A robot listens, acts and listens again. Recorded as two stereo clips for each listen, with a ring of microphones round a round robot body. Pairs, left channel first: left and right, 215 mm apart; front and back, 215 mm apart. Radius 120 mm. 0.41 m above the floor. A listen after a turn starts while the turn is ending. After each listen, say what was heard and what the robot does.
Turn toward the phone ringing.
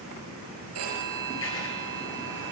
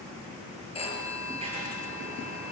The phone ringing: 65° right. Turn 65° right.
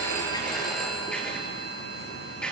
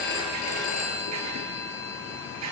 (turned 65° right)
Facing the phone ringing, over 4 m away.